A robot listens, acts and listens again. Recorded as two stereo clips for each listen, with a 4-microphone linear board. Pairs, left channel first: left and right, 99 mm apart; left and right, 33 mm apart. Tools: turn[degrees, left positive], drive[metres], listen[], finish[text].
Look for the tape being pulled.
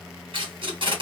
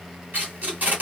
Thought: The tape being pulled: about 55° right or 125° right.
Action: turn[-55]
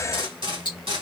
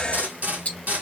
Thought: So it is at 65° right.
Action: turn[-65]
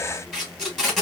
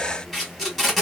Action: finish[Facing the tape being pulled.]